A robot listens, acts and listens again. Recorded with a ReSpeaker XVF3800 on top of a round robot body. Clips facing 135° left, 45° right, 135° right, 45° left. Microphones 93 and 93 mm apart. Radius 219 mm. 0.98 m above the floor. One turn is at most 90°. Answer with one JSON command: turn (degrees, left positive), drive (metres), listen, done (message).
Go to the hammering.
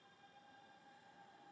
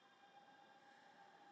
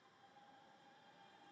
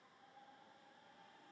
{"listen": true}
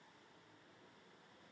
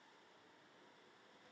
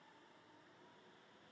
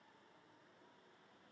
{"listen": true}
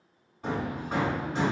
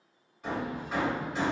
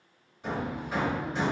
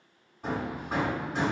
{"turn": 80}
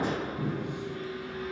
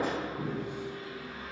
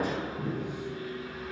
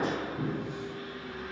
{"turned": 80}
{"turn": 35}
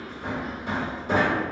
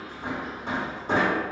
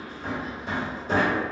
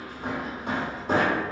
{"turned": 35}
{"turn": 15}
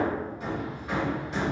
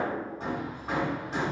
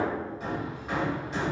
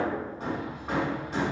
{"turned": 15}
{"drive": 1.0}
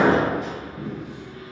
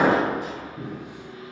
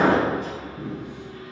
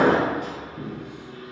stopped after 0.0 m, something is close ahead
{"done": "Blocked. The hammering is further on, straight ahead."}